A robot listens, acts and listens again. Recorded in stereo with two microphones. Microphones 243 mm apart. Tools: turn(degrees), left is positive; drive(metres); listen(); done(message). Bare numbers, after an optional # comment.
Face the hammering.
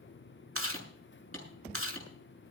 # The hammering: about 70° right or 110° right.
turn(-70)
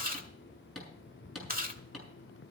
done("Facing the hammering.")